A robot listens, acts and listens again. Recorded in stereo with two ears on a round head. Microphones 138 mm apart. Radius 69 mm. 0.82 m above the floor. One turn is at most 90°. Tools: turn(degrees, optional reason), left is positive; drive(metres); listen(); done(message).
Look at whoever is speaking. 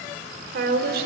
turn(degrees=-70, reason="The woman speaking: about 70° right or 110° right.")
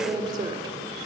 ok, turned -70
turn(degrees=-25, reason="So it is at 25° right.")
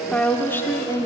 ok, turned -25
turn(degrees=25, reason="The woman speaking is now 25° left.")
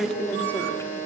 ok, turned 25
turn(degrees=15, reason="The woman speaking is now 15° left.")
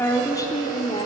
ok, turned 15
turn(degrees=30, reason="The woman speaking is now 30° left.")
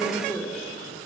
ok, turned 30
turn(degrees=10, reason="The woman speaking is now 10° left.")
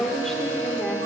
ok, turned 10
done("Facing the woman speaking, 2 to 4 m away.")